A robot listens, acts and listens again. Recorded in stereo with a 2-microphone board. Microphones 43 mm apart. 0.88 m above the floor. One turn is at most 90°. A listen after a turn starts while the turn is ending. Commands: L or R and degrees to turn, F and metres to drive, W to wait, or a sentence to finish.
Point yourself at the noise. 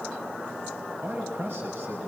R65
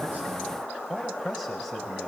Facing the man speaking.